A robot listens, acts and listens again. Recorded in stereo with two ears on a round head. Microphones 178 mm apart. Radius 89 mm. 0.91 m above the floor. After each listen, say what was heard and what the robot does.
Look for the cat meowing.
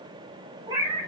The cat meowing: about 20° right or 160° right. Turn 20° right.
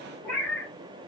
So it is at 10° left. Turn 10° left.
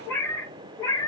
The cat meowing is now 20° left. Turn 20° left.
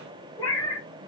The cat meowing is now 20° left. Turn 20° left.
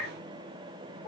The cat meowing is now 15° left. Turn 15° left.
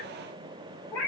The cat meowing is now 10° left. Turn 10° left.
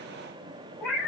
Found it: a cat meowing, straight ahead.